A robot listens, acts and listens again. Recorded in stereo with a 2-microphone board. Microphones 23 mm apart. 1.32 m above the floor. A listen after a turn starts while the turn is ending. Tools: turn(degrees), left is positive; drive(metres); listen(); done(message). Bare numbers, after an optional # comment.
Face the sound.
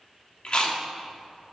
# The chewing: about 50° left or 130° left.
turn(50)
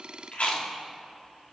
# So it is at 80° left.
turn(80)
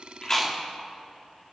listen()
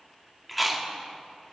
done("Facing the chewing.")